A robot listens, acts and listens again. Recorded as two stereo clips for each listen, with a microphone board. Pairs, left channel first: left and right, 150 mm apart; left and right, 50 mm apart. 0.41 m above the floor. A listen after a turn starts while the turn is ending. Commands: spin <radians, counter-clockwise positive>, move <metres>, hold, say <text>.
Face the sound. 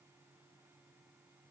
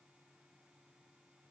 hold
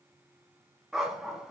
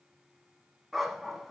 spin -0.52
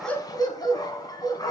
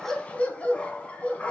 spin 0.44
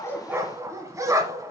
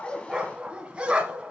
spin -0.35
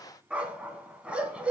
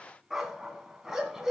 spin -0.17
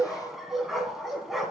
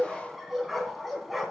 say Facing the dog barking.